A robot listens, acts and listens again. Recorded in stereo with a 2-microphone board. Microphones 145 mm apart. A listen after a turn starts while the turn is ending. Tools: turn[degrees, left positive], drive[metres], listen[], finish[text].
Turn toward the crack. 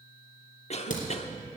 Thought: The crack: about 65° left or 115° left.
Action: turn[65]
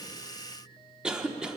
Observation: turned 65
Action: listen[]
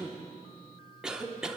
Action: finish[I heard a crack, but can't make it out now. It was about straight ahead or 50° left.]